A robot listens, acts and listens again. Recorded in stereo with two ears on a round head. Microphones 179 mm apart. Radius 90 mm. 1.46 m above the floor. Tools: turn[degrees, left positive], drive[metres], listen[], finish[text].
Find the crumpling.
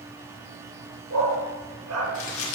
Thought: The crumpling: about 75° left or 105° left.
Action: turn[75]
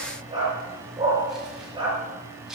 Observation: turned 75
Action: finish[Facing the crumpling.]